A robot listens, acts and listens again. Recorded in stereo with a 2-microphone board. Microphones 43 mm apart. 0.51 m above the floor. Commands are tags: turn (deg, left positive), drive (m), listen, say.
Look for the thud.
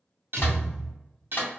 <turn deg="30"/>
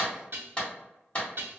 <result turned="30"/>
<listen/>
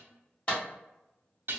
<say>I heard a thud, but can't make it out now. It was about 20° right or 140° left.</say>